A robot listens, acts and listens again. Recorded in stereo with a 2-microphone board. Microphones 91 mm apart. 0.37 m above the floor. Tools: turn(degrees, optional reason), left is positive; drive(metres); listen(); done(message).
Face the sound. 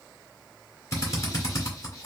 turn(degrees=35, reason="The drill: about 35° left or 145° left.")
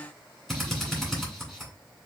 done("Facing the drill.")